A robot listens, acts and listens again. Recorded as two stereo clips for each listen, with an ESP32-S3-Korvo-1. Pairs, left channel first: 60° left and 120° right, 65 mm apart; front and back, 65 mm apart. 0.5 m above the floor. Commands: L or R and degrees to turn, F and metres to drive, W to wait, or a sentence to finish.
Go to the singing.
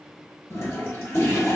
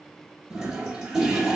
W
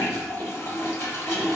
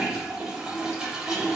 W
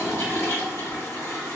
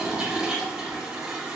I can't make out singing to turn to.